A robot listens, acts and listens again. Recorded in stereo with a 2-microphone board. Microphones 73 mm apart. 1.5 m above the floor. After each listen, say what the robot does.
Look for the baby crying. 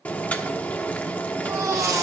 Turn 45° right.
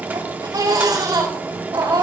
Turn 85° right.
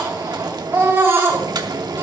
Turn 35° right.
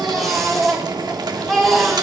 Facing the baby crying.